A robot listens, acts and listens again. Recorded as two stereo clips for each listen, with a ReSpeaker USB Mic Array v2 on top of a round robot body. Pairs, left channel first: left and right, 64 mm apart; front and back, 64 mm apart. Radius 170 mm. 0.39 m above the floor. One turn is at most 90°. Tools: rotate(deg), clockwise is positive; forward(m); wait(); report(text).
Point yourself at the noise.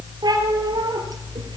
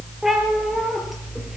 rotate(90)
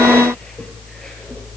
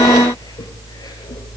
wait()
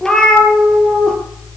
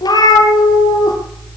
rotate(-10)
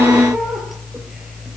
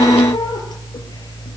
wait()
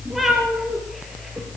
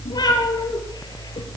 report("Facing the cat meowing, over 4 m away.")